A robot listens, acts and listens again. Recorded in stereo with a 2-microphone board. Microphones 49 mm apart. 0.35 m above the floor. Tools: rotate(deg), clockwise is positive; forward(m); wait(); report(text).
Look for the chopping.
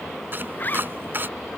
rotate(45)
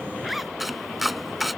report("Facing the chopping.")